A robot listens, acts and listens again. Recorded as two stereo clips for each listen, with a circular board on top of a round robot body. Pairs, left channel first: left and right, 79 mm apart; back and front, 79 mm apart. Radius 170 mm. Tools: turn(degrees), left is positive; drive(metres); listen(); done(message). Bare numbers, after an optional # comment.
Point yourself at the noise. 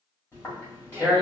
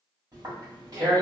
# The tearing paper: 30° left.
turn(30)
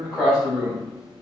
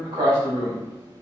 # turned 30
done("Found it: tearing paper, straight ahead.")